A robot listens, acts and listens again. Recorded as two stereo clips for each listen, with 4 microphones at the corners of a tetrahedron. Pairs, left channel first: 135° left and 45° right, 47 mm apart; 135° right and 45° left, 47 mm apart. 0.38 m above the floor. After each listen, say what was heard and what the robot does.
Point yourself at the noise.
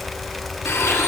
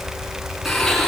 The blender: 145° left. Turn 145° left.
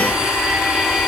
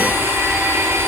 The blender is now 25° left. Turn 25° left.
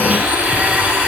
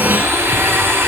The blender is now 15° left. Turn 15° left.
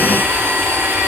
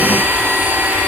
Found it: a blender, straight ahead.